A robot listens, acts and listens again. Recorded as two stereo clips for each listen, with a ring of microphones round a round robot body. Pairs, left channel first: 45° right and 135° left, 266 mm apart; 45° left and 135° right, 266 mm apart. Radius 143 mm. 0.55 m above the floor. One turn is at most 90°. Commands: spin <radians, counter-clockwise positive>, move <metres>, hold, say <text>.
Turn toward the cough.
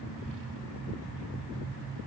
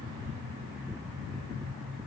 hold
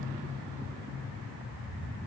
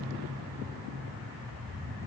hold
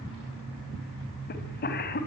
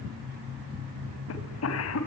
spin 0.17
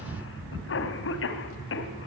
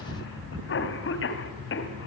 say Found it: a cough, straight ahead.